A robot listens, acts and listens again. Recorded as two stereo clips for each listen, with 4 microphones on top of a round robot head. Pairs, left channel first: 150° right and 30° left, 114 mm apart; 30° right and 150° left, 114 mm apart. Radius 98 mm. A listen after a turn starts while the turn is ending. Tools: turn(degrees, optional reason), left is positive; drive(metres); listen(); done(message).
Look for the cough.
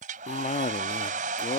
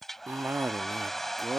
turn(degrees=-140, reason="The cough: 140° right.")
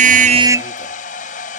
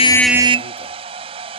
listen()
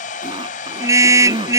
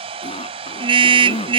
done("Facing the cough.")